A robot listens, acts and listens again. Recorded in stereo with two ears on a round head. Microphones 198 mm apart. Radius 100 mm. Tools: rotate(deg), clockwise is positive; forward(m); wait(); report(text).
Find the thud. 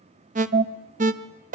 wait()
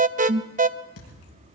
rotate(-90)
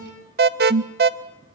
report("Facing where the thud came from. I can't hear it now.")